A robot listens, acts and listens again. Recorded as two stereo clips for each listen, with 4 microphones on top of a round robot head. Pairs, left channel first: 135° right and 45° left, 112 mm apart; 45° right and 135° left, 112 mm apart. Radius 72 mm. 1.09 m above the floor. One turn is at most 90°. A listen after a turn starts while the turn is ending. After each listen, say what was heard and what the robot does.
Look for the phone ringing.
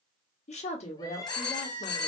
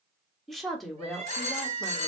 The phone ringing: 80° right. Turn 80° right.
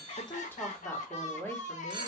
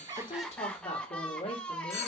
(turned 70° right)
The phone ringing is now 10° right. Turn 10° right.
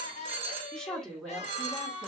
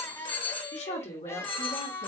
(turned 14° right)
Found it: a phone ringing, straight ahead.